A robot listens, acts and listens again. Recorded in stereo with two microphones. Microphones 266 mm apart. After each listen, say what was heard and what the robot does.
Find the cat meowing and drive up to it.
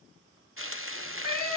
The cat meowing: about 70° right or 110° right. Turn 70° right.
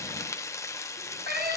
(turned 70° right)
So it is at 35° right. Turn 35° right.
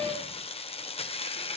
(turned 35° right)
The cat meowing is now 25° right. Turn 25° right.
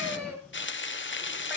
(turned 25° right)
Keep listening.
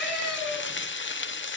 Drive 1.0 m forward.
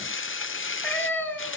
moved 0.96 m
The cat meowing is now 10° left. Turn 10° left.
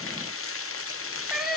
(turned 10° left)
Drive 1.0 m forward.
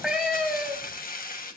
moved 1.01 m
Drive 1.0 m forward.
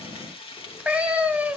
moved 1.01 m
Drive 1.0 m forward.
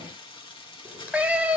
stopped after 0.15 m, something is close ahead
Arrived at the cat meowing, straight ahead.